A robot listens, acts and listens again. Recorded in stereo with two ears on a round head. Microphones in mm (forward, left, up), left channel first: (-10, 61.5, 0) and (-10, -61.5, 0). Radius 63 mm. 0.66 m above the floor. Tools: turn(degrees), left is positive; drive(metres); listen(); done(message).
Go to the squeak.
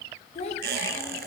turn(degrees=-90)
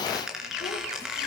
drive(metres=1.0)
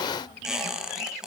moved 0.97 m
drive(metres=1.0)
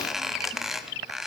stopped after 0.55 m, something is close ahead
done("Arrived at the squeak, straight ahead.")